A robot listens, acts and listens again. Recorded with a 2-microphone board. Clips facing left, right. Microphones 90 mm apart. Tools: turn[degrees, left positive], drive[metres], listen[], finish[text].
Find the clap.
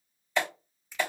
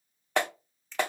Thought: The clap: about 60° right or 120° right.
Action: turn[-60]
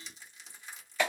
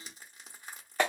Thought: So it is at 50° right.
Action: turn[-50]
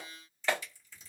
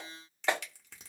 Thought: The clap is now 20° right.
Action: turn[-20]
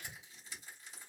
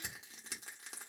Action: listen[]
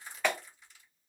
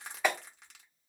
Action: finish[Facing the clap.]